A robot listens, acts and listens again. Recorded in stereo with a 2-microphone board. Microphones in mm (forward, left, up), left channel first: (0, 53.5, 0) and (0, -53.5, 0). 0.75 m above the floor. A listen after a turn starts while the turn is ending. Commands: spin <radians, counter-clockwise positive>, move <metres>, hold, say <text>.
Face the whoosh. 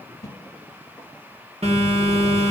spin 0.61
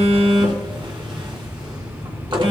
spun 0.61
hold
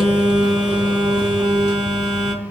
hold
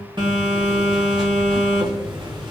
say I heard a whoosh, but can't make it out now. It was about straight ahead or 110° left.